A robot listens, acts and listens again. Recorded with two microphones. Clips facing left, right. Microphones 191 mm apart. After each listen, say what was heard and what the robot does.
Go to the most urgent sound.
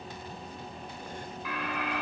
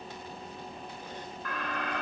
Turn 30° left.
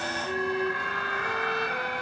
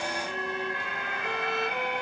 So it is at 20° right. Turn 20° right.
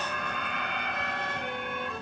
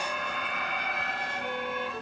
Drive 1.0 m forward.
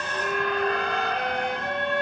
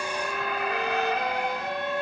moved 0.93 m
Drive 1.0 m forward.
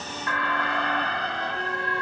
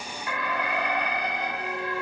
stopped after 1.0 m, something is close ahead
The alarm is now 15° right. Turn 15° right.
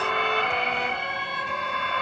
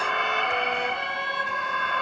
Arrived at the alarm, straight ahead.